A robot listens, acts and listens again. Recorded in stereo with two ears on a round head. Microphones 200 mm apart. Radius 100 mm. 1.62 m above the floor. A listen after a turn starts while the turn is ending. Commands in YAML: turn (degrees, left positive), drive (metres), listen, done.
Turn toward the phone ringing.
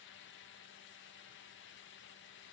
listen: true
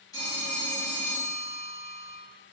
turn: 30
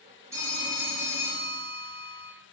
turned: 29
turn: -15
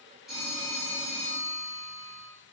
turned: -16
done: "Facing the phone ringing, 1 to 2 m away."